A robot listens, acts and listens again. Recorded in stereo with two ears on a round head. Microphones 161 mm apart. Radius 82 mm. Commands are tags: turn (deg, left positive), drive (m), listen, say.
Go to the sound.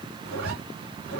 <turn deg="-70"/>
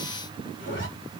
<turn deg="-45"/>
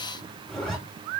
<drive m="1.0"/>
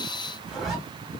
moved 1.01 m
<drive m="1.0"/>
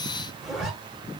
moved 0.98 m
<drive m="1.0"/>
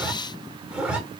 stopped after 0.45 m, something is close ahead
<say>Arrived at the zipper, straight ahead.</say>